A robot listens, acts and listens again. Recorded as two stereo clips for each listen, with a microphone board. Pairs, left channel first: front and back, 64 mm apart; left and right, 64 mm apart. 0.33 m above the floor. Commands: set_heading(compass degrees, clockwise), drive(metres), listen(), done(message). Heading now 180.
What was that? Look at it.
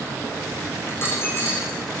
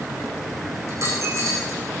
set_heading(230)
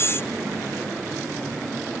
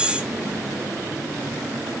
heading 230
done("I heard a dropped coin from this way, but can't make it out now.")